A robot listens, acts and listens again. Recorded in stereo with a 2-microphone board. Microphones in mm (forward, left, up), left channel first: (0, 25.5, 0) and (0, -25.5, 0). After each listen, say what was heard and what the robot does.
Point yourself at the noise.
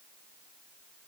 Keep listening.
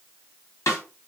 Turn 90° left.
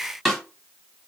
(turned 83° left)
Facing the snare drum, 1 to 2 m away.